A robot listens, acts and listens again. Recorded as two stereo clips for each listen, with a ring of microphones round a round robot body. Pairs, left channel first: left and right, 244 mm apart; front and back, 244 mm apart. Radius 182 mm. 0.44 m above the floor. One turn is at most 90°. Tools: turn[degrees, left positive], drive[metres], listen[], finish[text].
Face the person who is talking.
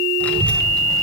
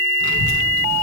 Action: finish[Found it: a child speaking, straight ahead, 2 to 4 m away.]